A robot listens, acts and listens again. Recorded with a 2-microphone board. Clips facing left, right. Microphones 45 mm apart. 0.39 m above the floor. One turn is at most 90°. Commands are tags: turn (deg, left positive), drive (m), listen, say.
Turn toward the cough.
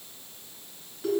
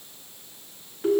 <listen/>
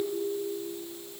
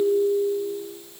<listen/>
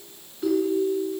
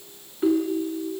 <say>I can't make out a cough, only a ringtone.</say>